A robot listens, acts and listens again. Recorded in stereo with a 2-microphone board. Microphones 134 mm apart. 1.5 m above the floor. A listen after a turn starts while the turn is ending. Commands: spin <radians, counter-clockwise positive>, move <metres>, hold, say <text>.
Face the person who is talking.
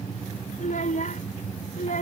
spin 1.57
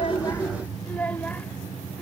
spin 0.17
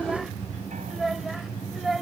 say Found it: a child speaking, straight ahead.